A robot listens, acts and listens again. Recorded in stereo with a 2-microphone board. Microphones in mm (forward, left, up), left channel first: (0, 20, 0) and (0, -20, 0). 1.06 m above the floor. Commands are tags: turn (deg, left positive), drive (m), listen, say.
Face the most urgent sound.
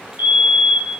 <turn deg="-50"/>
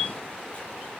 <say>Found it: a fire alarm, straight ahead.</say>